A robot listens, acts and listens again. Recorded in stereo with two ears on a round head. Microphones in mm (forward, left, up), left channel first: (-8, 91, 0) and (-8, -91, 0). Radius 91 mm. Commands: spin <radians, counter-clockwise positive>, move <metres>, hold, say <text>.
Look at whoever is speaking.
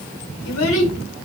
spin 1.13
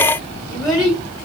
say Found it: a child speaking, straight ahead.